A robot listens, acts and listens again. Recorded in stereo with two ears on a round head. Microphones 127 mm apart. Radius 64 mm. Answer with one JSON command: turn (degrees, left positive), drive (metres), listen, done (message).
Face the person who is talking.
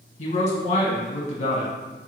{"turn": 45}
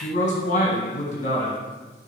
{"turn": 75}
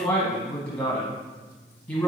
{"turn": 15}
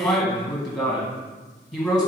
{"done": "Found it: a man speaking, straight ahead, 1 to 2 m away."}